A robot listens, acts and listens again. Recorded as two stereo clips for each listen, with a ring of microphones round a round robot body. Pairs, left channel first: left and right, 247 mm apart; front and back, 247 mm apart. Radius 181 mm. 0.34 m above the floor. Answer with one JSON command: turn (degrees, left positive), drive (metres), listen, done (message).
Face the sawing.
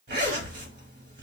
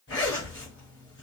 {"listen": true}
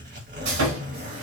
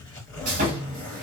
{"turn": -120}
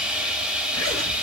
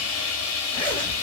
{"done": "Found it: sawing, straight ahead."}